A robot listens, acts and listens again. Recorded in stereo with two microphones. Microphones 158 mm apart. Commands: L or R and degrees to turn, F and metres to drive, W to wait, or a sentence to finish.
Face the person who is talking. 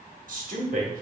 R60
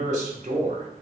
R55
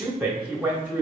R10
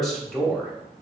Facing the man speaking.